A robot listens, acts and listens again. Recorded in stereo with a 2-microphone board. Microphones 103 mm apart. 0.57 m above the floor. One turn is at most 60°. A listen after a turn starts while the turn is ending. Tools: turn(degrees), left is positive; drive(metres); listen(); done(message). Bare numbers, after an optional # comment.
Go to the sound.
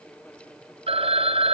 turn(-60)
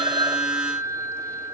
# So it is at 30° right.
turn(-30)
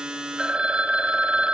# The phone ringing is now 10° right.
turn(-10)
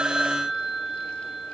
drive(1.0)
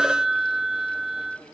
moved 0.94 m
drive(1.0)
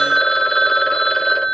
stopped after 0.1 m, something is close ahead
done("Arrived at the phone ringing, straight ahead.")